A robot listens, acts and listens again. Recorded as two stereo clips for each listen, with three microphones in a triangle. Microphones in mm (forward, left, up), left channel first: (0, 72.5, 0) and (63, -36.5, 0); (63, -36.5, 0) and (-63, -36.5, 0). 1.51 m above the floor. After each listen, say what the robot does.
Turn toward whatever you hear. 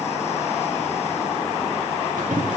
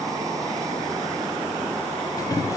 Turn 60° right.
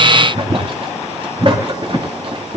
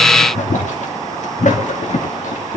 Turn 15° right.
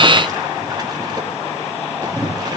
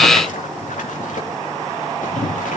Facing the boiling.